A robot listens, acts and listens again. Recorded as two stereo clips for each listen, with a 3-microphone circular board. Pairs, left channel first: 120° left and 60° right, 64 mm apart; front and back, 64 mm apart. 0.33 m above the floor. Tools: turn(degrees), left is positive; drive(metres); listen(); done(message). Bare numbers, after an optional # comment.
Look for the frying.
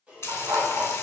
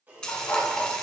# The frying: 75° left.
turn(75)
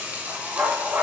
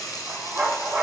done("Facing the frying.")